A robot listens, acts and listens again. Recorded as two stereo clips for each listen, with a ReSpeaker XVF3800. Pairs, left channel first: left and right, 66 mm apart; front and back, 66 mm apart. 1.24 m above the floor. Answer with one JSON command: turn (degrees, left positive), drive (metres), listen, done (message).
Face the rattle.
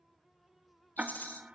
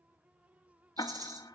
{"turn": 155}
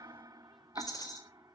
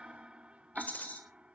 {"turn": 65}
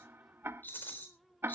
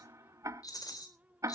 {"turn": 30}
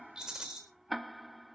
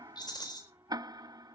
{"turn": -10}
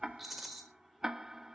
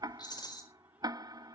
{"done": "Found it: a rattle, straight ahead, 2 to 4 m away."}